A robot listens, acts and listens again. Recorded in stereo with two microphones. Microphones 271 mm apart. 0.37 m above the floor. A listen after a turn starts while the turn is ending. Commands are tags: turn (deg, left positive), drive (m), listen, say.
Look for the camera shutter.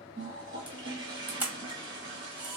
<turn deg="-30"/>
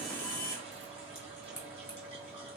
<turn deg="25"/>
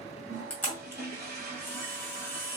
<turn deg="10"/>
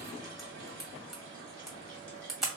<say>Facing the camera shutter.</say>